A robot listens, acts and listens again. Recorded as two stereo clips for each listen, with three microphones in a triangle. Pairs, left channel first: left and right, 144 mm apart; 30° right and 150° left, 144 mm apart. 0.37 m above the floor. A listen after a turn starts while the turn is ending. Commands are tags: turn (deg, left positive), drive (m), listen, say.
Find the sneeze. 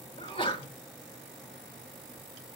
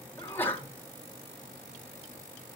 <turn deg="45"/>
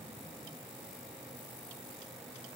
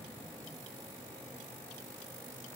<say>I heard a sneeze from this way, but can't make it out now.</say>